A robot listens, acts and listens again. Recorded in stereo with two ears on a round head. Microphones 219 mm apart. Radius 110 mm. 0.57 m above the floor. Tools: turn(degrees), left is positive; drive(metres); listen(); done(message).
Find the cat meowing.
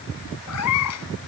turn(degrees=75)
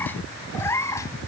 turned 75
turn(degrees=10)
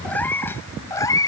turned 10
turn(degrees=15)
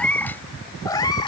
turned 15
turn(degrees=20)
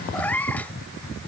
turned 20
done("Found it: a cat meowing, straight ahead.")